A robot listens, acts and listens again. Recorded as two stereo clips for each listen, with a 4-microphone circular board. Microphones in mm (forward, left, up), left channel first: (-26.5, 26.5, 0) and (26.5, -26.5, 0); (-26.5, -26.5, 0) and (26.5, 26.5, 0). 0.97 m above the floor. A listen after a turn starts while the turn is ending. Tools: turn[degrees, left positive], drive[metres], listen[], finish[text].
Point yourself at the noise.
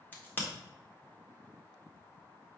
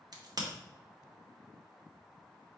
Thought: The crack: 70° left.
Action: turn[70]
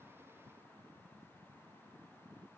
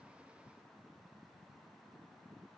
Action: finish[I heard a crack from this way, but can't make it out now.]